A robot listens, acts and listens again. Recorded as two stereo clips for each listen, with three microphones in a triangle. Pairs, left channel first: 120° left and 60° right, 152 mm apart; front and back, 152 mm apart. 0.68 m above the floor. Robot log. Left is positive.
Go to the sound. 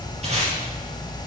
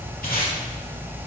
note: The tape being pulled: 15° right.
cmd yaw -15
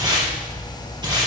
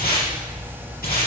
cmd fwd 1.0
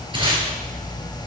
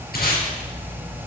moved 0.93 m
cmd fwd 1.0
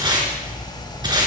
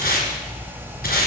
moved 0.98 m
cmd fwd 1.0
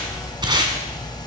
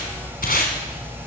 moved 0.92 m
cmd fwd 1.0
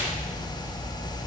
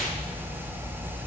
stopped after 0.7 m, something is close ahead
cmd idle
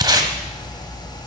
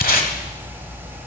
end: Arrived at the tape being pulled, straight ahead.